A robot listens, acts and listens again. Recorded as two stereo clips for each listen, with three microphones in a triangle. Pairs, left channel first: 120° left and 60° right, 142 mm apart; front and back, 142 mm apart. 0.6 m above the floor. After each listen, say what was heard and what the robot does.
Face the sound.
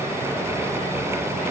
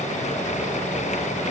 Keep listening.
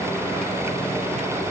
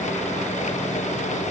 Keep listening.
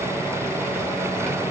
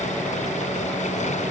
I can't make out anything.